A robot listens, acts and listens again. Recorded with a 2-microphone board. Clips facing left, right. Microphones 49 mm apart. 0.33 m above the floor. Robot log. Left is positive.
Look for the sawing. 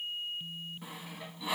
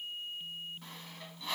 cmd yaw +30
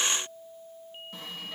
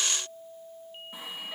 note: So it is at 15° right.
cmd yaw -15
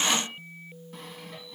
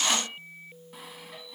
end: Found it: sawing, straight ahead, 1 to 2 m away.